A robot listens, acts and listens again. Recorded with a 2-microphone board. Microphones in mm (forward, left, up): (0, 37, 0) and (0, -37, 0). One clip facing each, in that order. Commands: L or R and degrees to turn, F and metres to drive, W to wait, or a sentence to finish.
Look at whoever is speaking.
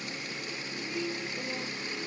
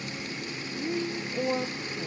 R60
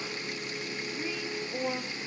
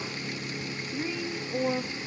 Facing the woman speaking, 1 to 2 m away.